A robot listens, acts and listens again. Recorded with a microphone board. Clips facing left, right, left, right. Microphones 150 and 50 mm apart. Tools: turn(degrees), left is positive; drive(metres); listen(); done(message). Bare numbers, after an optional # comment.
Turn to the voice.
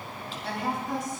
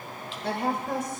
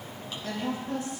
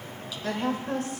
# The woman speaking: about 60° right or 120° right.
turn(-60)
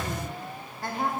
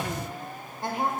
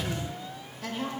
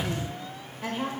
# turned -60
# So it is at 25° right.
turn(-25)
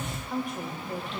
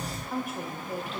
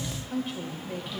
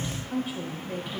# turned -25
done("Found it: a woman speaking, straight ahead.")